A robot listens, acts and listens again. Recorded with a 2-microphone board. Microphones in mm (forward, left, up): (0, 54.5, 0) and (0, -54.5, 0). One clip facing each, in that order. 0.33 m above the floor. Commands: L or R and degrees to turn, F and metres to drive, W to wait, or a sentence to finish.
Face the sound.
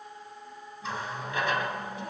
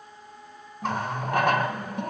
R55
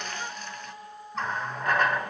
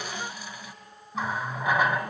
R10
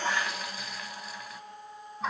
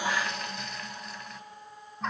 Facing the running tap, 1 to 2 m away.